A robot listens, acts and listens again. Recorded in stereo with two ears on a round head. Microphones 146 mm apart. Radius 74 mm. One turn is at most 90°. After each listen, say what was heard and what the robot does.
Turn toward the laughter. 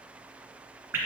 Keep listening.
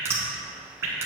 Keep listening.
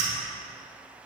I can't make out laughter to turn to.